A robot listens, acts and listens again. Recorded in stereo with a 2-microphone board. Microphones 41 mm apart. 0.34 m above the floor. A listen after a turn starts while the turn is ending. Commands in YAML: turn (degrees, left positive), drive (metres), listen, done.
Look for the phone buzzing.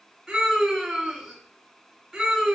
listen: true
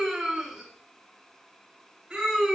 listen: true
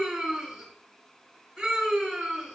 done: "I can't make out a phone buzzing to turn to."